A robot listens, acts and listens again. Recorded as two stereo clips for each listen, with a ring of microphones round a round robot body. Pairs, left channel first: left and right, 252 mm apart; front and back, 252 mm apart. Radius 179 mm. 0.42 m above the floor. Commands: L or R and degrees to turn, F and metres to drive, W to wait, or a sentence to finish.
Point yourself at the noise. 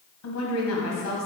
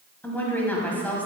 L85
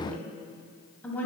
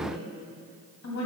Found it: a woman speaking, straight ahead.